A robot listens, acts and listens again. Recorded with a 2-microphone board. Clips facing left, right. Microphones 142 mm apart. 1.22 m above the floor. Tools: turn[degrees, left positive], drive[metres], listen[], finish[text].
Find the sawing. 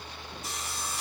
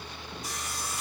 Thought: The sawing: about 25° left or 155° left.
Action: turn[25]
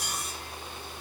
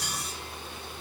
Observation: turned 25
Thought: So it is at 130° left.
Action: turn[130]
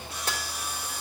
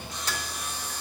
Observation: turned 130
Thought: The sawing is now 10° left.
Action: turn[10]
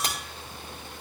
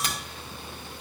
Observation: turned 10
Action: listen[]
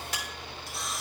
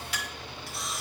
Action: finish[Facing the sawing, 1 to 2 m away.]